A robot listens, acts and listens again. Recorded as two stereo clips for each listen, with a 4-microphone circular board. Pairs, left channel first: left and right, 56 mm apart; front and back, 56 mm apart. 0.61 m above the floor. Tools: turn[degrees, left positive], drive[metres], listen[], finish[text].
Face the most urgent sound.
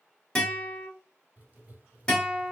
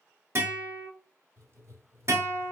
Action: listen[]
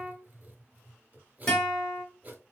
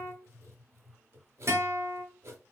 Action: listen[]
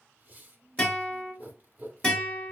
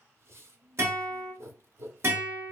Action: finish[I can't make out anything urgent, only a guitar and writing.]